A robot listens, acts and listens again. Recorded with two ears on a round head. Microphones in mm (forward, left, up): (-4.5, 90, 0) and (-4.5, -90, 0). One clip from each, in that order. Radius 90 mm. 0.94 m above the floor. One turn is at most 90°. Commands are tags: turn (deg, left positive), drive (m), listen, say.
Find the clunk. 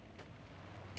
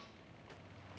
<listen/>
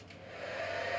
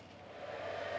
<listen/>
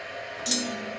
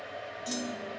<turn deg="55"/>
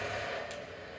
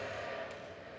<listen/>
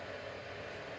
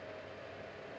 <say>I heard a clunk, but can't make it out now. It was about straight ahead or 70° left.</say>